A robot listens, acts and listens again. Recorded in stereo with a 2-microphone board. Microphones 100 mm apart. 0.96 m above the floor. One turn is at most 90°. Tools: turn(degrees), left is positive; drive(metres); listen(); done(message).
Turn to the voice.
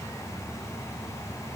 listen()
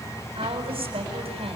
turn(degrees=-90)
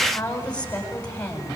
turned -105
turn(degrees=15)
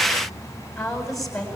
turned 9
done("Facing the woman speaking, over 4 m away.")